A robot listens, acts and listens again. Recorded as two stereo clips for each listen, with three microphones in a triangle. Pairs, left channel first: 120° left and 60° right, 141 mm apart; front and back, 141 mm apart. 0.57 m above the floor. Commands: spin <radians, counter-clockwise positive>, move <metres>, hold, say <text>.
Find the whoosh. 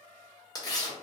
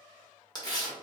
hold
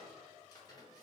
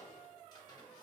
hold
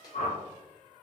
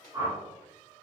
spin 2.09
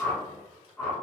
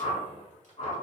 spin 0.70
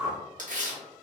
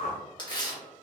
say Facing the whoosh.